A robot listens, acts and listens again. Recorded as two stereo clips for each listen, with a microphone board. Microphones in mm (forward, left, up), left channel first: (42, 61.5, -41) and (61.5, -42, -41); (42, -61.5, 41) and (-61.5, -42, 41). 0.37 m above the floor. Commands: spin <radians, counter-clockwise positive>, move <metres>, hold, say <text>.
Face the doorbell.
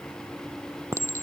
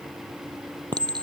hold
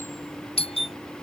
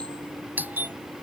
spin 1.66
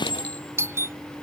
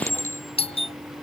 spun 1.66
spin -0.26
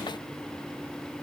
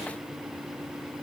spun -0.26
hold
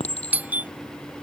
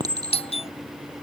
say Found it: a doorbell, straight ahead.